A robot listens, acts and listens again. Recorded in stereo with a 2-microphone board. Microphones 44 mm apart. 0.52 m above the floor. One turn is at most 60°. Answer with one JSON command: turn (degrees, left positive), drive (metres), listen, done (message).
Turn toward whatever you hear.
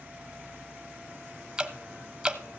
{"turn": -20}
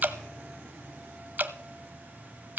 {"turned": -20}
{"turn": -60}
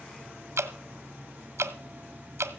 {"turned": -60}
{"turn": -60}
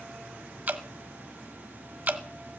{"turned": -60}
{"turn": -35}
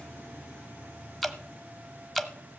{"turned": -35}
{"done": "Found it: dripping, straight ahead, under 1 m away."}